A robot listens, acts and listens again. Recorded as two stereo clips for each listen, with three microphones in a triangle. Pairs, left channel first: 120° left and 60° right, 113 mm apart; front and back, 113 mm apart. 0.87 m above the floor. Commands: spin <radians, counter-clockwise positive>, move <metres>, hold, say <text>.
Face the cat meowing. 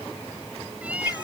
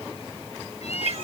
spin 0.35
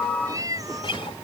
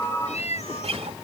say Facing the cat meowing.